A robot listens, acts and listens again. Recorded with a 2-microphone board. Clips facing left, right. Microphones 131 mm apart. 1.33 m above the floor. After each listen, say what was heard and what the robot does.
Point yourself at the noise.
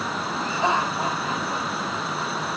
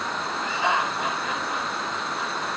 The laughter: about 35° left or 145° left. Turn 35° left.
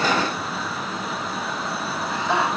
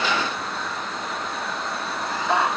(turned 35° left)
Found it: laughter, straight ahead.